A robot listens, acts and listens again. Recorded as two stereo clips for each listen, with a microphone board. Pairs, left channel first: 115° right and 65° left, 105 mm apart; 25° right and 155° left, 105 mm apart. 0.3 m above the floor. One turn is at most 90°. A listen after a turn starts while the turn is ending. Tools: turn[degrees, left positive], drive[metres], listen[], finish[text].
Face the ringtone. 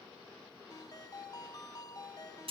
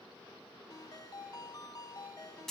Thought: The ringtone: 65° right.
Action: turn[-65]
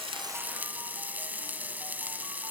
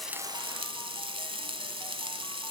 Action: listen[]
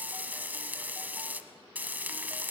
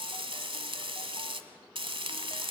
Action: listen[]
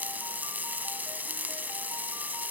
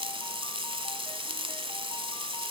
Action: finish[I heard a ringtone from this way, but can't make it out now.]